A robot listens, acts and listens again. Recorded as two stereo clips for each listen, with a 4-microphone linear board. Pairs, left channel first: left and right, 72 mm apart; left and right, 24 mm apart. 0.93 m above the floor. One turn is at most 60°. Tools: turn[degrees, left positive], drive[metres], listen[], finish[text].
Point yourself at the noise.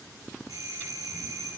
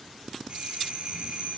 Thought: The doorbell: about 50° right or 130° right.
Action: turn[-50]
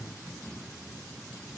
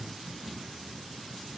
Action: listen[]
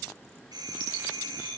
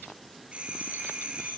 Thought: So it is at 80° right.
Action: turn[-60]
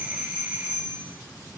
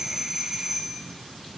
Thought: The doorbell is now 20° right.
Action: turn[-20]
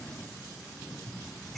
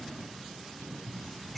Action: listen[]
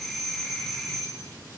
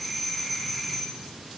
Action: finish[Found it: a doorbell, straight ahead, over 4 m away.]